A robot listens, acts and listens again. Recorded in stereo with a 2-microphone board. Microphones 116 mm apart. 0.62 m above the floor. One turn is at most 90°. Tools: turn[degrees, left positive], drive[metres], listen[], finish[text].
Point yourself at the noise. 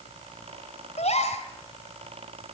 Thought: The gasp: about 75° left or 105° left.
Action: turn[75]
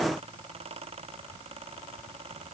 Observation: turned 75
Action: listen[]
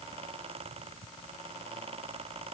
Action: finish[I heard a gasp, but can't make it out now. It was about straight ahead or 30° left.]